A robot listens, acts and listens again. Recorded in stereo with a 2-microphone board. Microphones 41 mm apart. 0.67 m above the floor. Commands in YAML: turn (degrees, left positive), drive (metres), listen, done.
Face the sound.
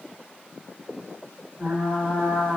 turn: -35
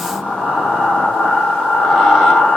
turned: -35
done: "Found it: frying, straight ahead."